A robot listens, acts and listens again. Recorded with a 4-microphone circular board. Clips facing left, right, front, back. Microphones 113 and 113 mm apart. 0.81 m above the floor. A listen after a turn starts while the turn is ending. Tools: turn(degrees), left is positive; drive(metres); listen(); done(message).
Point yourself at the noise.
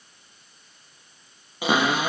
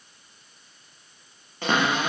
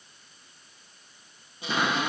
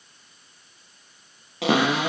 turn(degrees=170)
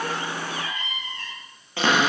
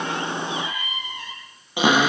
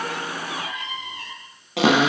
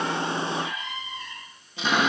turn(degrees=-15)
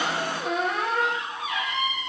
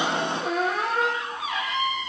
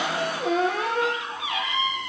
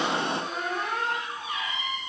done("Found it: a cupboard door, straight ahead, over 4 m away.")